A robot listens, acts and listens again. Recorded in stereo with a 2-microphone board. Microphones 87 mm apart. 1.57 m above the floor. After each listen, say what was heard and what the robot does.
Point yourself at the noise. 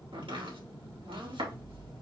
Turn 90° right.
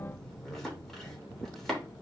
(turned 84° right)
Found it: chopping, straight ahead.